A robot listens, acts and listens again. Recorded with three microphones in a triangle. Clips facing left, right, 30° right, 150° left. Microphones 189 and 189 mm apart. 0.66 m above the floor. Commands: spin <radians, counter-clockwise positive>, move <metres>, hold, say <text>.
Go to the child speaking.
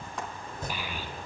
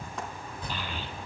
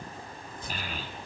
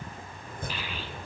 spin 0.17
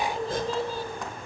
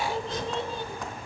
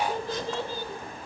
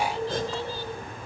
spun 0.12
move 1.0
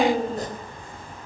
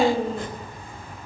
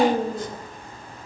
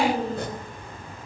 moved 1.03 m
move 1.0
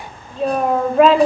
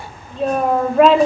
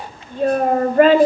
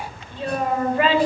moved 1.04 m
move 1.0
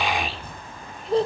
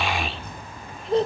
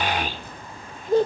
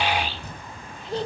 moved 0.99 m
move 1.0
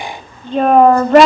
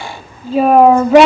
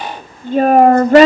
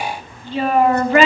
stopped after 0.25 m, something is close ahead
say Arrived at the child speaking, straight ahead.